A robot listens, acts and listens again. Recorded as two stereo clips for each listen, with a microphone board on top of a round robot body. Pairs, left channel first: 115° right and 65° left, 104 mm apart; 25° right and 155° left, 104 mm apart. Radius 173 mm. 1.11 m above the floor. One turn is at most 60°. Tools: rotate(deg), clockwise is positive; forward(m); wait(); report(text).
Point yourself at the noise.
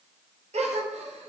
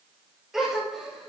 rotate(-60)
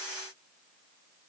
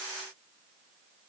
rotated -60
rotate(-10)
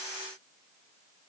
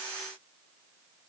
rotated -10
report("Facing where the gasp came from. I can't hear it now.")